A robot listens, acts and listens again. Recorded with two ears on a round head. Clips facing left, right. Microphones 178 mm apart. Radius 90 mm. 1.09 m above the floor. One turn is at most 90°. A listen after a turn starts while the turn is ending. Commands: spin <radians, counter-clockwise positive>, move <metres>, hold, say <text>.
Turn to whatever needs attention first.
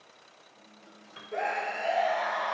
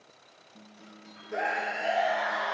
spin -0.52
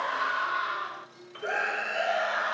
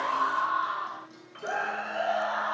spin 0.44
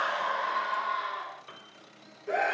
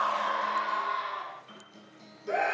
say Facing the scream, under 1 m away.